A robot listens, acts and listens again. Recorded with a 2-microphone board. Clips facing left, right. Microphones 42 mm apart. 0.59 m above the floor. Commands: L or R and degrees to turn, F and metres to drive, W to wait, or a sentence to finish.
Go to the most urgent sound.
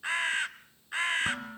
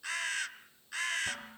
W
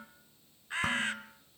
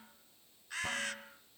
W
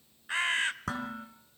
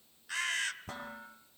I can't make out anything urgent to turn to.